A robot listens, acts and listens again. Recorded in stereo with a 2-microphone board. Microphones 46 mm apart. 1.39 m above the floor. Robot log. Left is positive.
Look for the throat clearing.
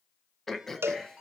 cmd yaw +30
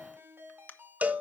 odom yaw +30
note: So it is at 145° left.
cmd yaw +145
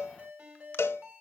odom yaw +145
cmd idle
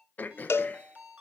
note: The throat clearing is now 40° left.
cmd yaw +40
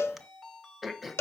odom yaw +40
end: Facing the throat clearing, under 1 m away.